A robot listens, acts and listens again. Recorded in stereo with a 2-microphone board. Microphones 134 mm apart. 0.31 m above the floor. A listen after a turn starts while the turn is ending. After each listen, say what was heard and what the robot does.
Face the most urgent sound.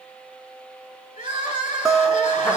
The crying: about 75° left or 105° left. Turn 75° left.
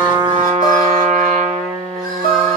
Keep listening.
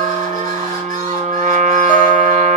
Keep listening.
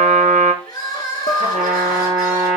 So it is at 30° left. Turn 30° left.
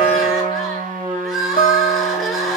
Found it: crying, straight ahead.